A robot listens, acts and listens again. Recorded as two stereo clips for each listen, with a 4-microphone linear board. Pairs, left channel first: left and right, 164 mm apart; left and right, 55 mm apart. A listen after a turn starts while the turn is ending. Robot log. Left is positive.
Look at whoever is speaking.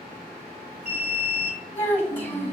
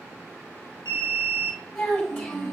cmd yaw +30
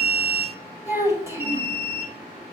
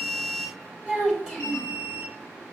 note: So it is at 15° right.
cmd yaw -15
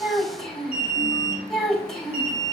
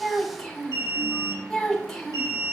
end: Facing the child speaking.